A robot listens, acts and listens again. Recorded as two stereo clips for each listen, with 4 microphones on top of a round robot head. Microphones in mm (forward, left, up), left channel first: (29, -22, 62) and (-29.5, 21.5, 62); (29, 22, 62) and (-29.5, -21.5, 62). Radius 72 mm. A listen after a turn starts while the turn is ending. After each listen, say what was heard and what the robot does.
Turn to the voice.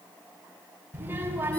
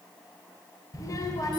The child speaking: 80° left. Turn 80° left.
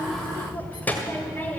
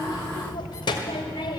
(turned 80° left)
The child speaking is now 30° left. Turn 30° left.
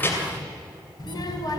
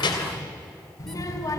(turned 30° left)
Facing the child speaking, 2 to 4 m away.